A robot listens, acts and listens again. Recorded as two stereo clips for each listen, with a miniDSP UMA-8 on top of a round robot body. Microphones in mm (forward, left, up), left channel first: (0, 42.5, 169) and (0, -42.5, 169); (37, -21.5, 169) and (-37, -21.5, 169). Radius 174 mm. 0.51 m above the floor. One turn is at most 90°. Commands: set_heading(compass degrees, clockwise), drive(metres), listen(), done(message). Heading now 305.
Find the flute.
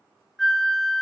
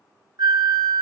set_heading(215)
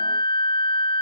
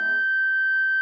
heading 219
set_heading(129)
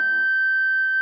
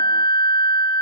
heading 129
done("Facing the flute.")